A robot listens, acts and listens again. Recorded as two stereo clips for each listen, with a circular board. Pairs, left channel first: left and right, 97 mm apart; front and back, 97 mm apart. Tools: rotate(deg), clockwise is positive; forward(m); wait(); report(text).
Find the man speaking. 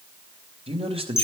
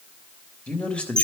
rotate(80)
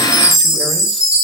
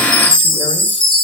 wait()
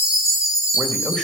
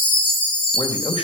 report("Found it: a man speaking, straight ahead.")